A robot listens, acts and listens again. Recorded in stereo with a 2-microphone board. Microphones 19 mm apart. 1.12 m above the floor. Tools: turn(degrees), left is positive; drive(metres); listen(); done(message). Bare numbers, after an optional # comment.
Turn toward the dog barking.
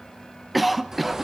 listen()
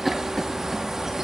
listen()
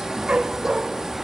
# The dog barking: about 70° right or 110° right.
turn(-70)
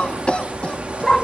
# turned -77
# So it is at 20° left.
turn(20)
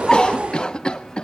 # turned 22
done("Found it: a dog barking, straight ahead, 1 to 2 m away.")